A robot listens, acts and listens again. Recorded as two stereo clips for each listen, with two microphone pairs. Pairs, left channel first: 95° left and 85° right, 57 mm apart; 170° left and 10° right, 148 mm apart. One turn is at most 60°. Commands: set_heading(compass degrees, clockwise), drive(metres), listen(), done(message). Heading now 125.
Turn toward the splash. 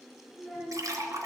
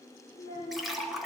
set_heading(185)
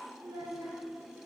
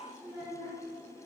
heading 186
set_heading(221)
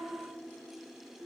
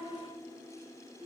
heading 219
done("I heard a splash from this way, but can't make it out now.")